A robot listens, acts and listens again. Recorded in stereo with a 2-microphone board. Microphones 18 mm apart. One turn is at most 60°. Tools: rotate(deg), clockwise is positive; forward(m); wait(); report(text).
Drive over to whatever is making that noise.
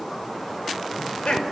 rotate(-60)
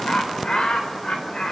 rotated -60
rotate(-50)
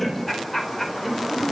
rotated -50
rotate(-10)
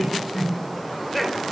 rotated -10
forward(1.0)
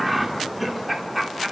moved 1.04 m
rotate(10)
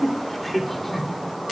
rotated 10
forward(1.0)
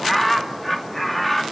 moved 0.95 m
forward(1.0)
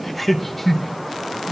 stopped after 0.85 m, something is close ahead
report("Arrived at the laughter, straight ahead.")